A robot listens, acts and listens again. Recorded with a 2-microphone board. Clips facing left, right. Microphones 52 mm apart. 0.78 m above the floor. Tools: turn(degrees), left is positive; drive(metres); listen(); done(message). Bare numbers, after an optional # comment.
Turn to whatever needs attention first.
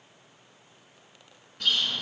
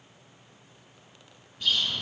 listen()
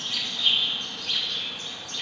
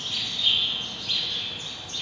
listen()
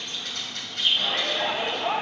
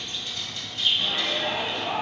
# The shout: about 70° left or 110° left.
turn(70)
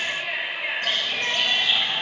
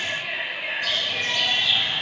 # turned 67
done("Found it: a shout, straight ahead.")